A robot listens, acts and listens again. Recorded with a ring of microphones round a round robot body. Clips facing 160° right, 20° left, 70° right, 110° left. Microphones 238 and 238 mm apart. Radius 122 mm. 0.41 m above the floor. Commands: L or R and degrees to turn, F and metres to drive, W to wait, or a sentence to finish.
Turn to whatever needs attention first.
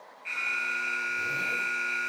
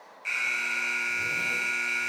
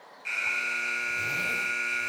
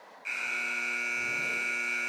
L25
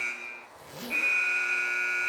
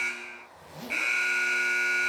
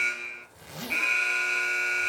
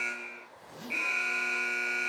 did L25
Found it: an alarm, straight ahead.